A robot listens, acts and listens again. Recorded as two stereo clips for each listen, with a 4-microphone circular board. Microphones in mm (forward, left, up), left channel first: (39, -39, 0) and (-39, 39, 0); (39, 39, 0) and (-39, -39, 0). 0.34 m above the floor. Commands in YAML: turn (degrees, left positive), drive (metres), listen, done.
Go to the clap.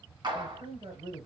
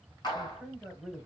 turn: 90
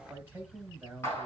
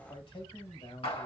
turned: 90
turn: 20
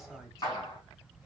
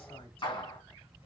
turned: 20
drive: 1.0
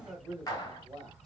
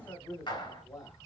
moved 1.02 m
turn: 10
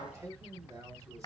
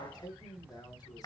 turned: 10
drive: 1.0
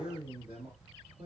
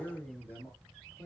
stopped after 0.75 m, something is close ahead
done: "I am next to the clap."